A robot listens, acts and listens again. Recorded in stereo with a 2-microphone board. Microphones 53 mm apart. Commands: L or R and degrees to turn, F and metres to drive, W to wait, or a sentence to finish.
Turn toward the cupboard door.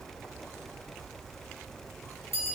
W
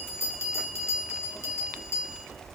W
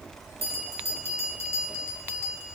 I can't make out a cupboard door, only a bell.